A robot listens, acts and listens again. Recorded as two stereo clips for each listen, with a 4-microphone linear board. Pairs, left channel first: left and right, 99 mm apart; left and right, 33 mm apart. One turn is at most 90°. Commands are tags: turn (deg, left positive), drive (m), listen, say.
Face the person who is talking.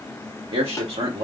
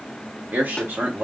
<turn deg="-70"/>
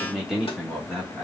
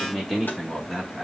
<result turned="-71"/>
<say>Found it: a man speaking, straight ahead.</say>